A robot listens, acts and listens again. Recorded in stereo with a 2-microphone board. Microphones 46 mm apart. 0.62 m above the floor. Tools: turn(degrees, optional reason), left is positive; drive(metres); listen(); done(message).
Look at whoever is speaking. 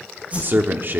turn(degrees=-50, reason="The man speaking: about 50° right or 130° right.")
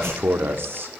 turn(degrees=-70, reason="So it is at 70° right.")
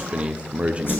turn(degrees=-30, reason="The man speaking is now 30° right.")
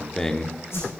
turn(degrees=15, reason="The man speaking is now 15° left.")
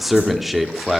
done("Facing the man speaking.")